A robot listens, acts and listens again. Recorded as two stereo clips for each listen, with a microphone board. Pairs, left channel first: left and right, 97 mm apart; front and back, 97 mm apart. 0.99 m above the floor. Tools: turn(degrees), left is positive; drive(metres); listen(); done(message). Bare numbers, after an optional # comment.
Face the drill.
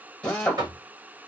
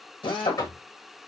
# The drill: 15° left.
turn(15)
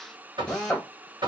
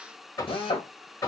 done("Found it: a drill, straight ahead, 1 to 2 m away.")